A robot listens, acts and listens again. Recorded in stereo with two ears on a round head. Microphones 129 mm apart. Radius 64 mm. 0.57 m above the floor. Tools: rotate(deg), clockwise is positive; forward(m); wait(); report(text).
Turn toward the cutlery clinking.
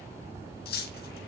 rotate(-90)
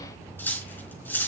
rotate(-15)
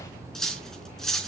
report("Found it: cutlery clinking, straight ahead.")